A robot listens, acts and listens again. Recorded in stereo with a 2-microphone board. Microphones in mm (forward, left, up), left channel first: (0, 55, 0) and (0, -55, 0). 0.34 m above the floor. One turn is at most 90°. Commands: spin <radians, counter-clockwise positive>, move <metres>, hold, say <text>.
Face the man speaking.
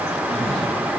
hold
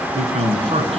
spin -1.13
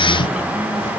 hold
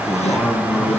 say Found it: a man speaking, straight ahead, 2 to 4 m away.